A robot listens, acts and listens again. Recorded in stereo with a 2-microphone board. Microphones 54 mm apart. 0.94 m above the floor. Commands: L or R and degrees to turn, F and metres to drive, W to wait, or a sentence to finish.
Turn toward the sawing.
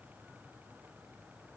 W
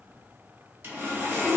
R40
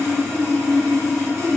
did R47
R85
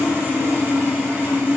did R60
R30
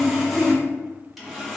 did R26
Found it: sawing, straight ahead, under 1 m away.